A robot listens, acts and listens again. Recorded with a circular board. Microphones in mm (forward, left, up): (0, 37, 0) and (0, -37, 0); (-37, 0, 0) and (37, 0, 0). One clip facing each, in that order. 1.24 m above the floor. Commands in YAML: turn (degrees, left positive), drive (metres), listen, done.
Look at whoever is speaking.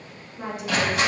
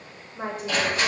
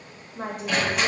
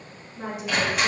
turn: -140
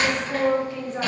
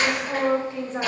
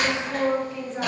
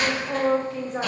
turn: -30
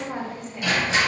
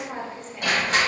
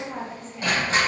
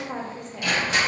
done: "Facing the woman speaking."